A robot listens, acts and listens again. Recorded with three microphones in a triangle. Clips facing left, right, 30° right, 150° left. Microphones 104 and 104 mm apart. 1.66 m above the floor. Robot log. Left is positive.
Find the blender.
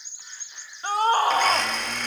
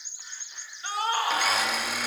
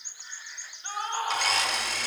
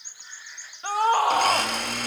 note: The blender: 170° right.
cmd yaw -170
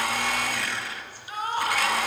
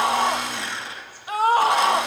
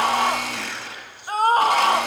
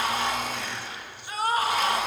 note: The blender is now 25° right.
cmd yaw -25
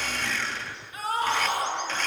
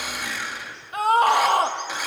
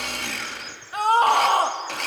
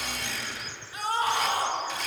note: The blender is now 10° right.
cmd yaw -10
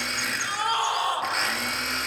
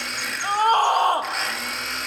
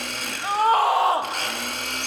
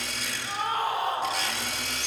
end: Facing the blender.